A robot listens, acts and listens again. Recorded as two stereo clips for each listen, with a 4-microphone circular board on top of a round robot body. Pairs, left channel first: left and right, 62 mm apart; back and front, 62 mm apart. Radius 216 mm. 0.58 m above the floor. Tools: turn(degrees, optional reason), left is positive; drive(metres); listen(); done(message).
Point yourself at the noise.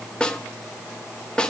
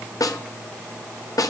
turn(degrees=165, reason="The snare drum: 165° left.")
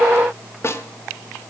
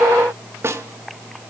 turn(degrees=45, reason="The snare drum is now 45° left.")
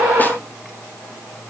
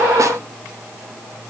listen()
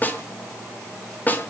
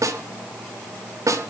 turn(degrees=30, reason="The snare drum is now 30° left.")
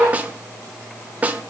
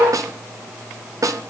turn(degrees=-25, reason="The snare drum is now 25° right.")
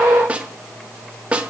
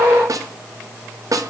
turn(degrees=-20, reason="The snare drum is now 20° right.")
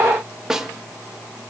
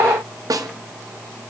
turn(degrees=-10, reason="The snare drum is now 10° right.")
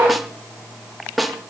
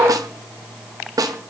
done("Found it: a snare drum, straight ahead, 1 to 2 m away.")